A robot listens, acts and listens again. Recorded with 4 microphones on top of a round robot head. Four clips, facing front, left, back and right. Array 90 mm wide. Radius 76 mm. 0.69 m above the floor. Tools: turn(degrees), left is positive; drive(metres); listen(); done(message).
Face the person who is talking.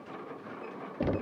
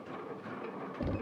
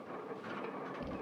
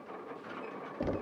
listen()
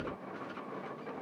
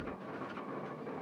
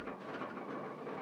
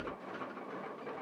listen()
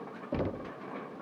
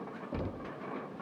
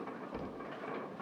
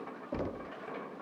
done("I can't make out anyone speaking to turn to.")